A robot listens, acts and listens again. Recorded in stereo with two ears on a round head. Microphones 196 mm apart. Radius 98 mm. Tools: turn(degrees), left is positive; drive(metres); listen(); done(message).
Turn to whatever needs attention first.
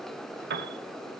listen()
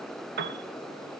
listen()
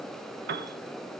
done("I can't make out anything urgent, only a piano.")